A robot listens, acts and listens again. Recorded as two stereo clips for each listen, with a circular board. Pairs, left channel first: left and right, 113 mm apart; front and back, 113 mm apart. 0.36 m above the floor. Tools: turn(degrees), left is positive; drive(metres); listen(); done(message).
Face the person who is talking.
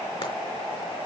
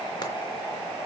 listen()
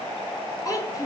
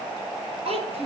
turn(degrees=150)
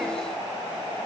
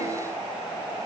listen()
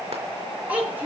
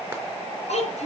turn(degrees=-15)
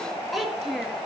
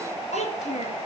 done("Facing the child speaking.")